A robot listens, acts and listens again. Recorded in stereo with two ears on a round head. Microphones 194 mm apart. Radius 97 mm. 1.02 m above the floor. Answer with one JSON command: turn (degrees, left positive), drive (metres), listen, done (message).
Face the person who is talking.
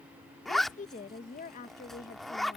{"turn": 35}
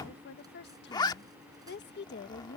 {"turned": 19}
{"turn": 130}
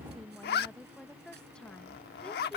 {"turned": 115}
{"done": "Found it: a woman speaking, straight ahead."}